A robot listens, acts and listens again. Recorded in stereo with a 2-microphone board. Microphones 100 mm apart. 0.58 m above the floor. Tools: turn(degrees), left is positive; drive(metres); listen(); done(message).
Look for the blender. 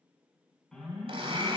turn(degrees=-70)
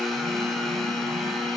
done("Facing the blender, 1 to 2 m away.")